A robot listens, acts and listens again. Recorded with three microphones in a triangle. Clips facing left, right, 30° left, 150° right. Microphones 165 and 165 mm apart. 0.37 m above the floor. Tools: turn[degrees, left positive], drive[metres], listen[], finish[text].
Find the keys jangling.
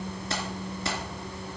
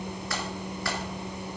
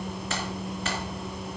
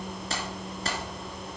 Thought: The keys jangling: 160° left.
Action: turn[160]
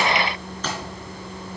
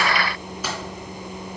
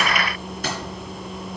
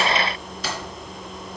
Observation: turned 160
Thought: The keys jangling is now 10° right.
Action: turn[-10]
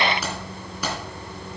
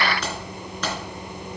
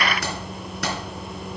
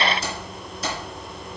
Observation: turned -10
Thought: The keys jangling is now 10° left.
Action: turn[10]
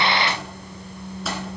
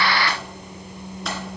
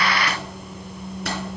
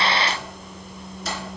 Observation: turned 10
Action: listen[]
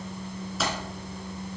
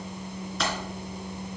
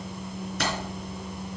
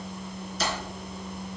Action: finish[Facing the keys jangling, 2 to 4 m away.]